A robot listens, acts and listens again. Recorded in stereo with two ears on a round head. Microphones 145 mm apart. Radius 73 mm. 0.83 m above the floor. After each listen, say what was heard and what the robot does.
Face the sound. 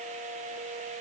Keep listening.
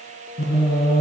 The singing: about 70° left or 110° left. Turn 70° left.
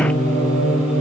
So it is at 10° right. Turn 10° right.
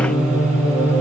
The singing is now 10° right. Turn 10° right.
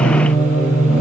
The singing is now 10° right. Turn 10° right.
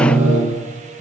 The singing is now 10° right. Turn 10° right.
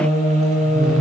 Found it: singing, straight ahead, 2 to 4 m away.